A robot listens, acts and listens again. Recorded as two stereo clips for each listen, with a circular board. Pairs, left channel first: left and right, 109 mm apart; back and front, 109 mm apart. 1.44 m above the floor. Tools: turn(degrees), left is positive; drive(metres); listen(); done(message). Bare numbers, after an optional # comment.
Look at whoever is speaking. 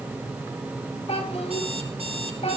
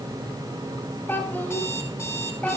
# The child speaking: 105° left.
turn(105)
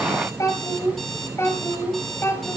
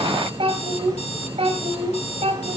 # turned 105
# The child speaking is now 20° left.
turn(20)
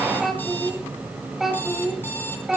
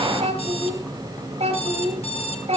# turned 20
done("Found it: a child speaking, straight ahead.")